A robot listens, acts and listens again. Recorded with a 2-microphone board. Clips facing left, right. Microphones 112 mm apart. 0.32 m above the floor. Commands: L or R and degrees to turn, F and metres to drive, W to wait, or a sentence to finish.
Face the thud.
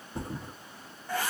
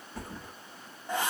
L20
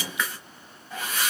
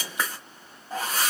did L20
W
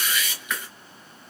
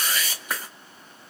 I heard a thud, but can't make it out now. It was about straight ahead or 140° left.